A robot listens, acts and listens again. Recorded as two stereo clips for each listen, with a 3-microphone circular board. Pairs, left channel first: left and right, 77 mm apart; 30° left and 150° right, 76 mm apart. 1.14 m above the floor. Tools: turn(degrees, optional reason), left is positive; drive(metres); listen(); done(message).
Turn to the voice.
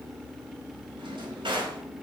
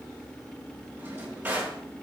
listen()
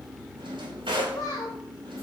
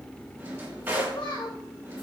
turn(degrees=50, reason="The child speaking: 50° left.")
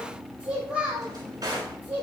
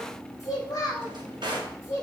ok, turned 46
turn(degrees=-25, reason="The child speaking is now 25° right.")
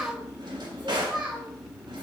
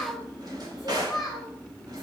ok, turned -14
turn(degrees=-15, reason="The child speaking is now 15° right.")
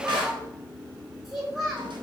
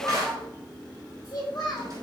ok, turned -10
turn(degrees=-10, reason="The child speaking is now 10° right.")
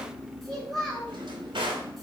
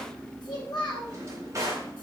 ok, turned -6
done("Found it: a child speaking, straight ahead, 2 to 4 m away.")